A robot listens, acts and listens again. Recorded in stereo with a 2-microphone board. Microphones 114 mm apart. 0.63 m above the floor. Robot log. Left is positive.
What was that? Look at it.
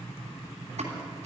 cmd yaw -90
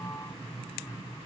end: Facing where the pop came from. I can't hear it now.